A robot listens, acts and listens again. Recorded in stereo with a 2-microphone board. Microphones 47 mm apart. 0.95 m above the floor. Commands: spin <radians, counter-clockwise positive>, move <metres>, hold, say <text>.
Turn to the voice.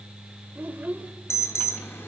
spin -0.61
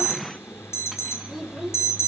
say Found it: a child speaking, straight ahead.